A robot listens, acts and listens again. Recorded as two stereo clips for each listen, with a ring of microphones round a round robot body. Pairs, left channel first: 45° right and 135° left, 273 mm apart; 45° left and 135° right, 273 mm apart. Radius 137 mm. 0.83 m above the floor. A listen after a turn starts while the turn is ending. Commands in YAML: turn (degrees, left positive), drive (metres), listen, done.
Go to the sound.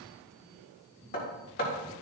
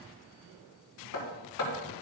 turn: 10
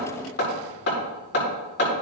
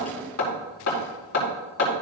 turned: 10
drive: 1.0
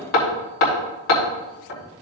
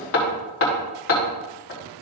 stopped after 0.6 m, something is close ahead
done: "Blocked. The hammering is further on, straight ahead."